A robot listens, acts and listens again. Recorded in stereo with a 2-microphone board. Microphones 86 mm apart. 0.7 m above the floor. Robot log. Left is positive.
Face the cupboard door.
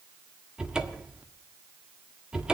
cmd yaw -30
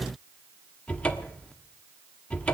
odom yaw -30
note: So it is at 20° left.
cmd yaw +20
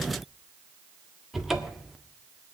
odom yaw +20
end: Found it: a cupboard door, straight ahead.